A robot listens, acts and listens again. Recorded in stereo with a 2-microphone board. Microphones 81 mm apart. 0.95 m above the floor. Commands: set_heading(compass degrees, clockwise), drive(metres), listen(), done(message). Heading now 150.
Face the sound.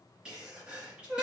set_heading(170)
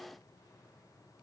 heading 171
listen()
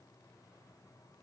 done("I heard a sneeze, but can't make it out now. It was about straight ahead or 140° right.")